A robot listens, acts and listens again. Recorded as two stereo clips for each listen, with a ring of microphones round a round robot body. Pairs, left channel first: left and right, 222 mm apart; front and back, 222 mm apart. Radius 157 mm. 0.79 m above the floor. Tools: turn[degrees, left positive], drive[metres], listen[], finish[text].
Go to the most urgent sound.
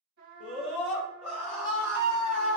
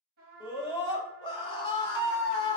Thought: The scream: 65° left.
Action: turn[65]
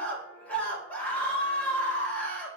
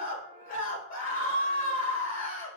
Thought: The scream is now 10° left.
Action: turn[10]
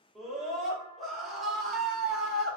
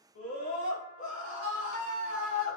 Action: drive[1.0]
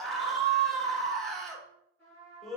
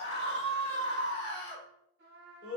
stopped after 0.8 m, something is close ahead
Action: finish[I am next to the scream.]